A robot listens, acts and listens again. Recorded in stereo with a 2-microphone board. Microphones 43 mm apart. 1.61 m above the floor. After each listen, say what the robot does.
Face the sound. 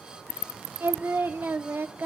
Turn 60° right.
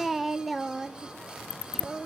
Found it: singing, straight ahead.